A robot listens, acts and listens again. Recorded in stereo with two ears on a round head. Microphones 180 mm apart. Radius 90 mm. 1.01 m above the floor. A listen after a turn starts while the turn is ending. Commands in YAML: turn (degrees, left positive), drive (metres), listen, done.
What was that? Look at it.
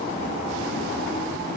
listen: true
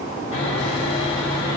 turn: 40
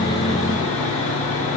turn: 100
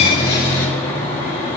turn: 15
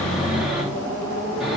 done: "Found it: sawing, straight ahead."